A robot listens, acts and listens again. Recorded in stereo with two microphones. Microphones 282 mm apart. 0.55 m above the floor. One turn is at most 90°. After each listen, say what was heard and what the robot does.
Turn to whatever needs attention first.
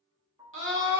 The scream: about 45° right or 135° right. Turn 45° right.
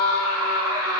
So it is at 80° right. Turn 80° right.
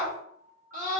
The scream is now 30° right. Turn 30° right.
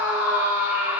The scream is now 10° right. Turn 10° right.
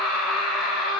Found it: a scream, straight ahead.